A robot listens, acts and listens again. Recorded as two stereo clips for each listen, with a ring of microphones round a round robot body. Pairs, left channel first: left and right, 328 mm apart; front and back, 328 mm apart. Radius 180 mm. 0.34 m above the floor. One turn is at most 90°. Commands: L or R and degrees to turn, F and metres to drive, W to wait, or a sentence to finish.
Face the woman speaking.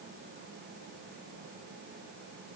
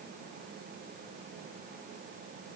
W
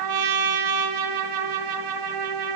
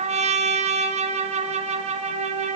W
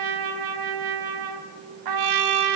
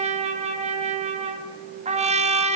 I can't make out a woman speaking, only a trumpet.